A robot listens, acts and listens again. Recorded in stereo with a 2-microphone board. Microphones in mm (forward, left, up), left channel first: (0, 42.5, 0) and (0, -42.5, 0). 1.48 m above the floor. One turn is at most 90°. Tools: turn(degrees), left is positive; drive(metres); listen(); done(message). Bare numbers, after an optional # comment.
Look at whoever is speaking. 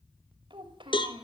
turn(-90)
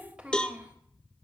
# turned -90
# So it is at 10° right.
turn(-10)
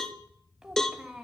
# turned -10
done("Facing the child speaking, 2 to 4 m away.")